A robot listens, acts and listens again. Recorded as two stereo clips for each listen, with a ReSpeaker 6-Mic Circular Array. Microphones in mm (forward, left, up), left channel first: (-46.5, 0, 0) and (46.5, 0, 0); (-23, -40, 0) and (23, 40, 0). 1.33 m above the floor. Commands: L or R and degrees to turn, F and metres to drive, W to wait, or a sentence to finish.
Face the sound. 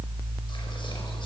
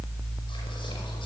W
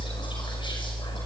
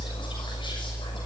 W
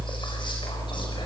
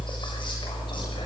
I can't make out anything to turn to.